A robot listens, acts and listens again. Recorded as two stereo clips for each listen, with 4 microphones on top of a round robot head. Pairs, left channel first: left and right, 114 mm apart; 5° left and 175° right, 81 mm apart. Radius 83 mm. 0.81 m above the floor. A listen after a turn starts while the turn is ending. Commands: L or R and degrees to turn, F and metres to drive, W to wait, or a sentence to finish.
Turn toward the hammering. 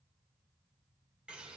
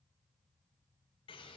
W
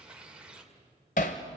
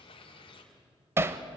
L125
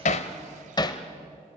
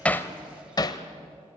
L40
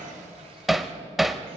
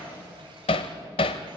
Found it: hammering, straight ahead.